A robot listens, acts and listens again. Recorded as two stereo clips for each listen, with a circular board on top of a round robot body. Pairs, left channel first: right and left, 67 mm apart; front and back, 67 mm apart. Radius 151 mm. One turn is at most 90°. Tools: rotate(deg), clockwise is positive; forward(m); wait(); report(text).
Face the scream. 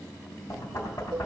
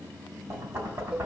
wait()
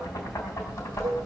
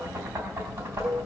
wait()
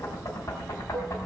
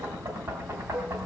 report("I can't make out a scream, only a cowbell and knocking.")